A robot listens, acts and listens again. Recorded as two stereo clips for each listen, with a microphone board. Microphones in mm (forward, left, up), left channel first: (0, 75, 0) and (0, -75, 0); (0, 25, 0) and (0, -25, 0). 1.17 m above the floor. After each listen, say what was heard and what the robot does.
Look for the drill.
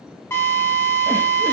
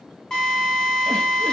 The drill: about 15° left or 165° left. Turn 15° left.
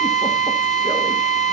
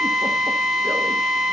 Found it: a drill, straight ahead.